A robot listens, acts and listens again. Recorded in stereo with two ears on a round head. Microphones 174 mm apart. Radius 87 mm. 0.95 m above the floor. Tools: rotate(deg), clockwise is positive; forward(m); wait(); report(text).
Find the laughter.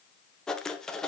wait()
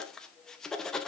wait()
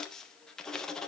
report("I can't make out laughter to turn to.")